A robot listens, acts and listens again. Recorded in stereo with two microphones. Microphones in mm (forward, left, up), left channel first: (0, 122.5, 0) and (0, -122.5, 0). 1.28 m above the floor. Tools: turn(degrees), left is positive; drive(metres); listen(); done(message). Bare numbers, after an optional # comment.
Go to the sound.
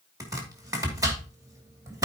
turn(-30)
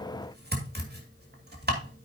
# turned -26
# So it is at 140° right.
turn(-140)
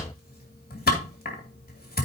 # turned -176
# The chopping is now 40° left.
turn(40)
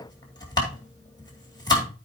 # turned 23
# The chopping is now 15° left.
turn(15)
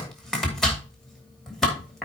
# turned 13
drive(1.0)
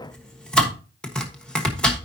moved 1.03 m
drive(1.0)
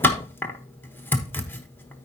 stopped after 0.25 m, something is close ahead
# The chopping is now 10° left.
turn(10)
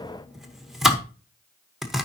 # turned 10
done("Arrived at the chopping, straight ahead.")